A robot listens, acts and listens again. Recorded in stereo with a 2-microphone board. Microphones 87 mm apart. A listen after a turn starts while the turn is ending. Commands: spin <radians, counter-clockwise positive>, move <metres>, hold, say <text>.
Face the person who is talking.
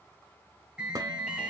hold
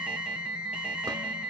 hold
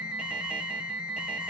say I can't make out anyone speaking to turn to.